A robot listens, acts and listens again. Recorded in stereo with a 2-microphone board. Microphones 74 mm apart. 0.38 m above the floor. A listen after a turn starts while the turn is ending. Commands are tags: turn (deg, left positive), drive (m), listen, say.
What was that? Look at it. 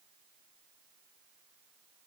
<listen/>
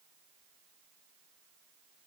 <listen/>
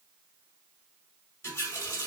<turn deg="35"/>
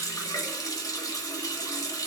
<turn deg="105"/>
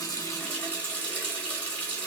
<turn deg="25"/>
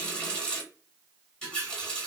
<turn deg="15"/>
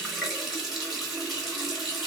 <say>Facing the running tap, 1 to 2 m away.</say>